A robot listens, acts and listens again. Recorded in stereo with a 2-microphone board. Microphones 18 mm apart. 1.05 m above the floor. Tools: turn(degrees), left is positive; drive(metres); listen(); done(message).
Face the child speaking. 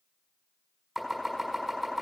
listen()
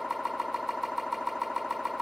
listen()
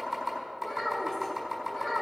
turn(degrees=25)
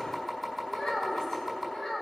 turn(degrees=135)
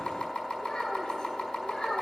turn(degrees=45)
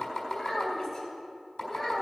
turn(degrees=10)
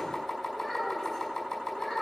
done("Found it: a child speaking, straight ahead, over 4 m away.")